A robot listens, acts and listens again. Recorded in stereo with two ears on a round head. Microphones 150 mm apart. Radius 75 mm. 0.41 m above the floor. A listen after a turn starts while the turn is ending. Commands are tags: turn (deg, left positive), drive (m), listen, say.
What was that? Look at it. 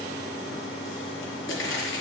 <turn deg="90"/>
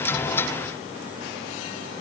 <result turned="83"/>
<say>I heard a pop from this way, but can't make it out now.</say>